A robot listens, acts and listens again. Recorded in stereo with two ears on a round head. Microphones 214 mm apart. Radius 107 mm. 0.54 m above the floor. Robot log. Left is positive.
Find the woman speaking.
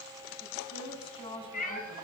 note: The woman speaking: about 25° left or 155° left.
cmd yaw +25
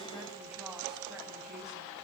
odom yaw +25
cmd idle
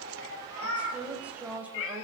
end: Found it: a woman speaking, straight ahead.